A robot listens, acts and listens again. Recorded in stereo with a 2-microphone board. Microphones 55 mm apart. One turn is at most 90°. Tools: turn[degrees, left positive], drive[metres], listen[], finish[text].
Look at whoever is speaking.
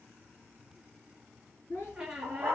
Thought: The child speaking: about 65° left or 115° left.
Action: turn[65]
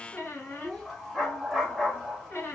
Action: finish[Found it: a child speaking, straight ahead, 2 to 4 m away.]